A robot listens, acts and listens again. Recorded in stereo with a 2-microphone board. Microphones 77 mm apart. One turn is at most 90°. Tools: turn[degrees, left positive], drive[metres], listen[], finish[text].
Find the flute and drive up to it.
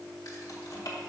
Action: listen[]
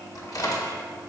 Action: listen[]
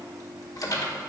Action: finish[I can't make out a flute to turn to.]